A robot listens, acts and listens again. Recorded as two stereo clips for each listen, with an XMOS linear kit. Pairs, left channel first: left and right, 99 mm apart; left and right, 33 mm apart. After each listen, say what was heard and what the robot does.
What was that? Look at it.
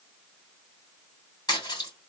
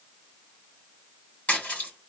The splash: about 45° left or 135° left. Turn 45° left.
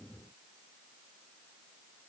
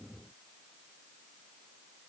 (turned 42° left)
Keep listening.
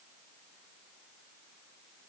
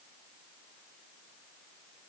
I heard a splash, but can't make it out now. It was about 5° left or 95° left.